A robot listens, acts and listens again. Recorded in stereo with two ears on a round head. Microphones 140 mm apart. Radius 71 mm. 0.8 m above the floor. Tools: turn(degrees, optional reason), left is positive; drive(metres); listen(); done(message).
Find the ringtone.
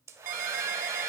turn(degrees=-55, reason="The ringtone: about 55° right or 125° right.")
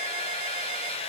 listen()
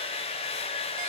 listen()
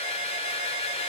done("I heard a ringtone, but can't make it out now. It was about straight ahead or 70° right.")